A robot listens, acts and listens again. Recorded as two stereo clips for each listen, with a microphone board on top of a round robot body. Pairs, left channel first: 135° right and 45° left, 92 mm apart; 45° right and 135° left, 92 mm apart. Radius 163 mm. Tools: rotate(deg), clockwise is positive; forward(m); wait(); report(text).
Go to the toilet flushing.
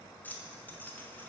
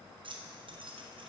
wait()
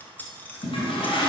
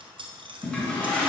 rotate(125)
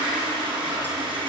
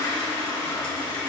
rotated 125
rotate(-15)
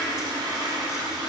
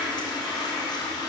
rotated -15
forward(1.0)
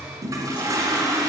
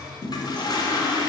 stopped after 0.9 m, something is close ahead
report("Arrived at the toilet flushing, straight ahead.")